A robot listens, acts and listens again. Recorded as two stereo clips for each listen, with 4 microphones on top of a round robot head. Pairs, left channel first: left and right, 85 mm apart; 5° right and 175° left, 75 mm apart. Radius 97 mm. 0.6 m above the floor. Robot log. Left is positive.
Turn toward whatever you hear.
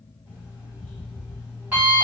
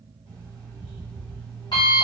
note: The alarm clock: 20° right.
cmd yaw -20
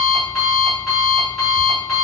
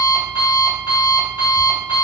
end: Found it: an alarm clock, straight ahead.